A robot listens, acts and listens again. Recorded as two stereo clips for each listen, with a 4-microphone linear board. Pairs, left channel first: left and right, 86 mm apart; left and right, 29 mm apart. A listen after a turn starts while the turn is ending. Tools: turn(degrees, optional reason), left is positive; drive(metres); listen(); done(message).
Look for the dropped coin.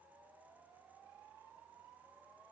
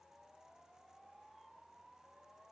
listen()
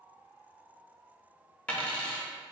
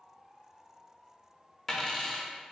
turn(degrees=30)
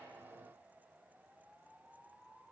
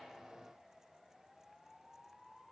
listen()
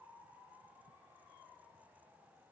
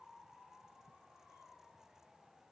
done("I heard a dropped coin, but can't make it out now. It was about 15° right or 135° left.")